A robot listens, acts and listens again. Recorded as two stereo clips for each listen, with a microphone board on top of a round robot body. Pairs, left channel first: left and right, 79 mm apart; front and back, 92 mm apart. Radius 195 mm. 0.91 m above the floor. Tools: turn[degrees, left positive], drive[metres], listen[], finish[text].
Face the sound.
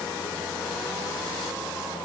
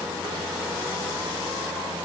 Action: listen[]
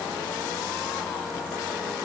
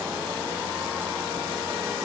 Action: listen[]
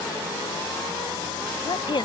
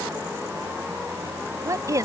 Thought: The woman speaking: 120° left.
Action: turn[120]
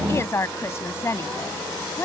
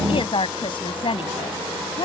Thought: The woman speaking is now 30° left.
Action: turn[30]
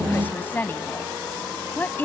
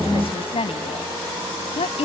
Thought: The woman speaking is now 25° left.
Action: turn[25]
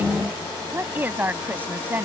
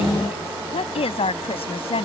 Thought: The woman speaking is now 20° right.
Action: turn[-20]
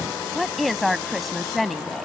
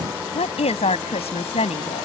Action: finish[Facing the woman speaking.]